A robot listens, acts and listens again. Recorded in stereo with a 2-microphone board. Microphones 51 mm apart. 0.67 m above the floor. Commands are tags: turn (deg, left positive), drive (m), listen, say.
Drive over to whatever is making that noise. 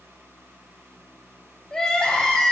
<turn deg="30"/>
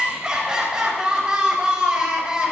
<turn deg="-15"/>
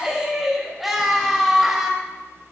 <drive m="1.0"/>
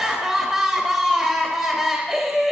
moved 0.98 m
<drive m="1.0"/>
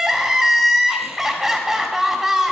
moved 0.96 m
<turn deg="-10"/>
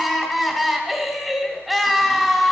<drive m="1.0"/>
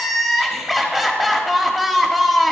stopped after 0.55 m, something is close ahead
<say>Arrived at the crying, straight ahead.</say>